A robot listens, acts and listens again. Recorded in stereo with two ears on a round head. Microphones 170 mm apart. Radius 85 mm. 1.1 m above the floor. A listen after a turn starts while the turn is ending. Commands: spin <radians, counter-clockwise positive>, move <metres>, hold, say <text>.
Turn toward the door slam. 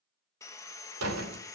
spin -1.57
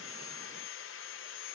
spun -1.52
say Facing where the door slam came from. I can't hear it now.